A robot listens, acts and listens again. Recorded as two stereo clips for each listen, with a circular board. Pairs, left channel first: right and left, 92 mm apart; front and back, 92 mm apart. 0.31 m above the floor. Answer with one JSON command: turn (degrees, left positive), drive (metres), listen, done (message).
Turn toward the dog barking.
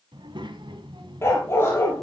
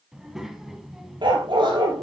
{"turn": -155}
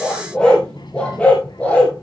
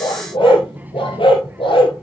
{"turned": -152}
{"turn": -15}
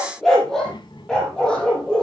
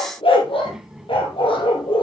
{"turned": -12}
{"turn": -10}
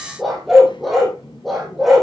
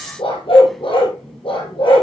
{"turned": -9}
{"done": "Found it: a dog barking, straight ahead."}